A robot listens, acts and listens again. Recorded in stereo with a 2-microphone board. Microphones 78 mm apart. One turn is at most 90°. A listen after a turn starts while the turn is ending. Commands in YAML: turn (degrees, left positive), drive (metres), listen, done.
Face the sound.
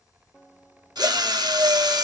turn: -65
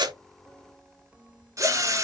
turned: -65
turn: -45
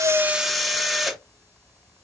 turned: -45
done: "Facing the drill."